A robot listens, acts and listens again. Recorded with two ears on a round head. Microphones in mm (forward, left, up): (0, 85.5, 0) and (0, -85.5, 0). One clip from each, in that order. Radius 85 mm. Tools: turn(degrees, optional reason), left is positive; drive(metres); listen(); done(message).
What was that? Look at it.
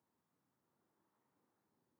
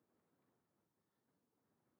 listen()
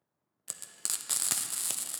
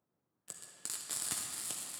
turn(degrees=25, reason="The frying: about 25° left or 155° left.")
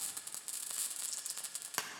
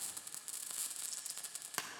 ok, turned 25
done("Facing the frying.")